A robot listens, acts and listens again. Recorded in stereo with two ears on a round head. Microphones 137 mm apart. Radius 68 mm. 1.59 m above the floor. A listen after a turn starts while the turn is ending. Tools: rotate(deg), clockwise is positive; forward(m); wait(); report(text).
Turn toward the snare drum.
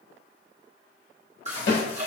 rotate(-90)
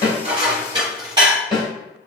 report("Found it: a snare drum, straight ahead, 2 to 4 m away.")